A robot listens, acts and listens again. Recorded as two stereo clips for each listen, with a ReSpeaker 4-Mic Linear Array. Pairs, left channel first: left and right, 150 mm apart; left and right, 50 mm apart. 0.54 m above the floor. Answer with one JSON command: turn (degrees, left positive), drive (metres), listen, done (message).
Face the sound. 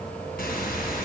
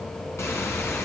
{"turn": 90}
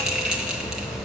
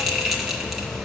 {"done": "Facing the bell."}